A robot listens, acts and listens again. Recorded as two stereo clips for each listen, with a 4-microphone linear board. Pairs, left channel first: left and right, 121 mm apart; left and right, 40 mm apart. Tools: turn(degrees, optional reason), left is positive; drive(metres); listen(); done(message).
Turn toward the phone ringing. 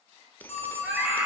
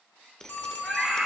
turn(degrees=65, reason="The phone ringing: about 65° left or 115° left.")
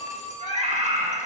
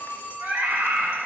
turn(degrees=45, reason="So it is at 45° left.")
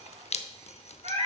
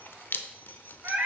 listen()
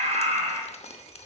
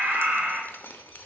listen()
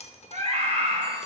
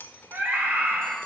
done("I heard a phone ringing from this way, but can't make it out now.")